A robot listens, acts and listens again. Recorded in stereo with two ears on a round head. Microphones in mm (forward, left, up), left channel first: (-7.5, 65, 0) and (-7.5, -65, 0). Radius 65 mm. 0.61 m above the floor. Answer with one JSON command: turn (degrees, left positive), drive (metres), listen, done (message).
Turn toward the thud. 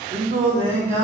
{"listen": true}
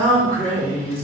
{"listen": true}
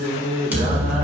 {"turn": -30}
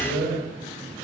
{"listen": true}
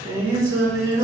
{"done": "I heard a thud, but can't make it out now. It was about 20° left or 140° right."}